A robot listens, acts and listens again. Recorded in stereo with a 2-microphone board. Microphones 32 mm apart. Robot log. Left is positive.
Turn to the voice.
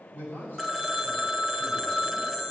cmd yaw +90
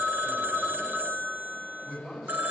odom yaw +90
note: So it is at 15° right.
cmd yaw -15
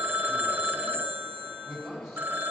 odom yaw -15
end: Facing the man speaking.